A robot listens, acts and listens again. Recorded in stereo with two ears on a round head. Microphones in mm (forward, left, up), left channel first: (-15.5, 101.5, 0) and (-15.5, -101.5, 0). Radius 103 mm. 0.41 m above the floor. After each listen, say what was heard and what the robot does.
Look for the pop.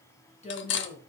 Keep listening.
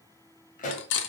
The pop: about 35° left or 145° left. Turn 35° left.
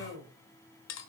Keep listening.
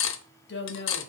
I heard a pop, but can't make it out now. It was about straight ahead or 110° left.